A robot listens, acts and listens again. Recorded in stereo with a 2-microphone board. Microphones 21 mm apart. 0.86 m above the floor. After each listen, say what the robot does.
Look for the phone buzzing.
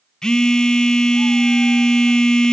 Turn 25° left.
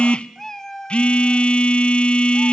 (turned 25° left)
Turn 125° left.
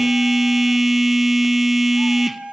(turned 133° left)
Facing the phone buzzing.